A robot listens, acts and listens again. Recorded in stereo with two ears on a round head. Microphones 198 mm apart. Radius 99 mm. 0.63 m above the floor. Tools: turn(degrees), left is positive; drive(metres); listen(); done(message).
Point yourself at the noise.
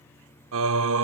turn(degrees=-65)
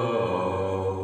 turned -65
done("Facing the singing.")